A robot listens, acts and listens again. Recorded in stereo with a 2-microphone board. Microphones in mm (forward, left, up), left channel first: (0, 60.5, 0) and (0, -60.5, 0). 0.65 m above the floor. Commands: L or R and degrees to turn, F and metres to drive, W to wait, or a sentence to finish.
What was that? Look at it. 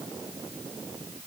W
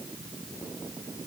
W
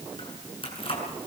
L50
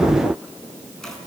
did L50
Facing the keys jangling.